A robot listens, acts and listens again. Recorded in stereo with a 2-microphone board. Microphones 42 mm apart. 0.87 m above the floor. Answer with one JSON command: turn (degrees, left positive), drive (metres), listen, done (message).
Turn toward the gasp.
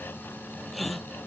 {"turn": 30}
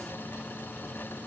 {"listen": true}
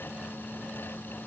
{"done": "I heard a gasp, but can't make it out now. It was about 30° right or 150° left."}